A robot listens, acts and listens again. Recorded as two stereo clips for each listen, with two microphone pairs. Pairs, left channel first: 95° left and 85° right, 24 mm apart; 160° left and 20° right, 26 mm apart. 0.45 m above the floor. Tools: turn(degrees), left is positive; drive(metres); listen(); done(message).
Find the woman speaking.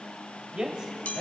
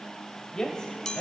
turn(degrees=-140)
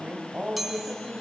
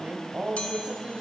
turn(degrees=-50)
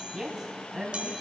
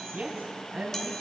turn(degrees=-10)
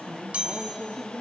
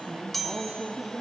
done("Found it: a woman speaking, straight ahead, 2 to 4 m away.")